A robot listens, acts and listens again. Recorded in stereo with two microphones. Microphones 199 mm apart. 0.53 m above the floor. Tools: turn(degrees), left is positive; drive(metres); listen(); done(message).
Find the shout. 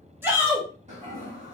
turn(degrees=-30)
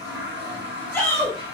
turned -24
turn(degrees=10)
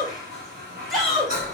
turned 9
done("Found it: a shout, straight ahead.")